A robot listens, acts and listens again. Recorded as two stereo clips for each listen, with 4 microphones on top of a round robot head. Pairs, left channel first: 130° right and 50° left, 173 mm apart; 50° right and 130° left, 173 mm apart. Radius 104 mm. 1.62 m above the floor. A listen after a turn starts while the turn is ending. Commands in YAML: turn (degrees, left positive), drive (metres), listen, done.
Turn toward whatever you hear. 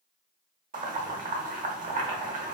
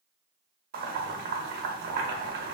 turn: 95
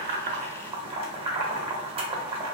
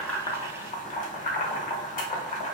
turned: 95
done: "Found it: boiling, straight ahead, under 1 m away."